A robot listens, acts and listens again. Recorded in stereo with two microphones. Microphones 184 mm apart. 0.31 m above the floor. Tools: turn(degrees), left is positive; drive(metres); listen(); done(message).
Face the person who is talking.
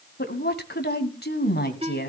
turn(degrees=60)
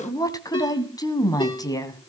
turn(degrees=20)
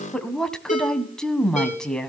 done("Found it: a woman speaking, straight ahead.")